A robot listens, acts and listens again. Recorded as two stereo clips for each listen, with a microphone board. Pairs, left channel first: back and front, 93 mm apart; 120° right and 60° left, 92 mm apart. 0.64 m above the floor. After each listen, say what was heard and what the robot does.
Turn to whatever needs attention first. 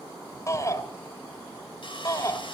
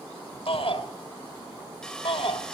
The shout: 125° right. Turn 125° right.
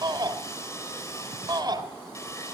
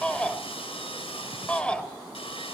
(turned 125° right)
The shout is now 40° right. Turn 40° right.
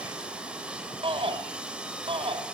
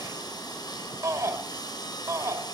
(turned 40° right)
Found it: a shout, straight ahead, 2 to 4 m away.